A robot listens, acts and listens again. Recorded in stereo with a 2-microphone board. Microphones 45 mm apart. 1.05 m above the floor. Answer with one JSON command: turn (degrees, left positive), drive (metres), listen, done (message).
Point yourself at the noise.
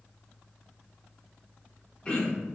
{"turn": 25}
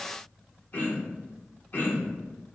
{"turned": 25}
{"turn": 130}
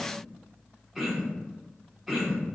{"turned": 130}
{"done": "Facing the throat clearing."}